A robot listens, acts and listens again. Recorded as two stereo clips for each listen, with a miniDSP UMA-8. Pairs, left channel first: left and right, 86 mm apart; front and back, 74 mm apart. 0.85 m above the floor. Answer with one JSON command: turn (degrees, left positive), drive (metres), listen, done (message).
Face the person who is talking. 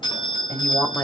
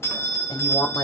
{"turn": 30}
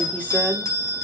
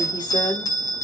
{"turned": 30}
{"listen": true}
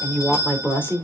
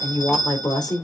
{"turn": 25}
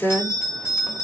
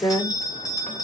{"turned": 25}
{"turn": 25}
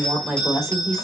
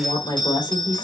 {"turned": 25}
{"done": "Found it: a woman speaking, straight ahead."}